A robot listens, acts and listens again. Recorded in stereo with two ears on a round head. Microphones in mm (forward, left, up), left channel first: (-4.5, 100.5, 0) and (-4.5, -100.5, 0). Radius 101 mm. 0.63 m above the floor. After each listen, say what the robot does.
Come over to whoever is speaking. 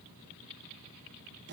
Keep listening.
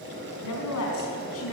Turn 70° left.
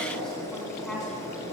Drive 1.0 m forward.
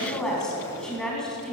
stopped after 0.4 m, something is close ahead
Something is in my way. I am facing the woman speaking but have not reached it.